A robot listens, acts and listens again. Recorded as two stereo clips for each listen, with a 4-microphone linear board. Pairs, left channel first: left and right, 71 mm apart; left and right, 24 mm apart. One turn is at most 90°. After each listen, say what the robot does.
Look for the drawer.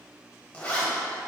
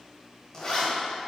Keep listening.
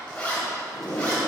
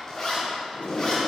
Turn 60° left.
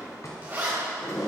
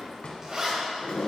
Turn 55° left.
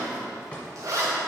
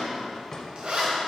Turn 20° left.
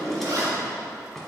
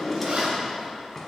Facing the drawer.